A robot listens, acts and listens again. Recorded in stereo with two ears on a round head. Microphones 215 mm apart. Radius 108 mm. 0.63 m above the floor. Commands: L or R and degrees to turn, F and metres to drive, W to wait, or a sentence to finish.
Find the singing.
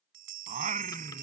R30
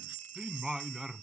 Found it: singing, straight ahead.